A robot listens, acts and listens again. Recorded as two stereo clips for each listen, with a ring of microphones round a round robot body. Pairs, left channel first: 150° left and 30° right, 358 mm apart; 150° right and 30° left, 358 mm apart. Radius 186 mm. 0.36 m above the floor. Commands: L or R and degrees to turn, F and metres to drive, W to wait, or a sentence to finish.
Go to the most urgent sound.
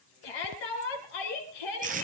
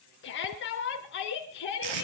L150
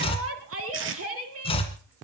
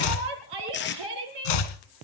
L20
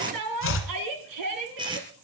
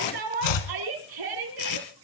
F1.0
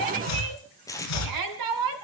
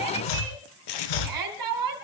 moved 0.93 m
F1.0
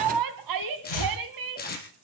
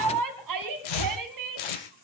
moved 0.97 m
F1.0
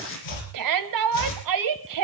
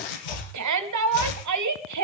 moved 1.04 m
F1.0
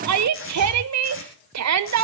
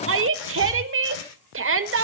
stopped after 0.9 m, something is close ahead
R10
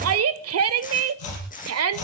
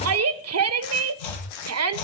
I am next to the shout.